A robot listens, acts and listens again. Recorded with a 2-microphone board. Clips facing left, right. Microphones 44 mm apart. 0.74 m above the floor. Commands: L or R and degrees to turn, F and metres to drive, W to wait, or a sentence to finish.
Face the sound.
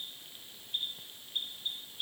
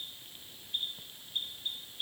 W
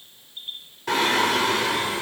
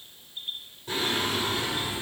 L90
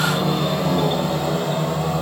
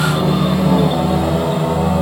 R15
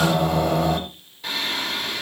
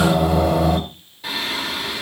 Found it: singing, straight ahead, 2 to 4 m away.